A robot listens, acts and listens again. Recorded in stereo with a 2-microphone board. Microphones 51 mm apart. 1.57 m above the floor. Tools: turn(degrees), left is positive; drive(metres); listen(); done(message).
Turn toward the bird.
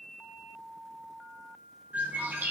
turn(degrees=-40)
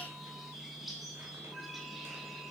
done("Facing the bird.")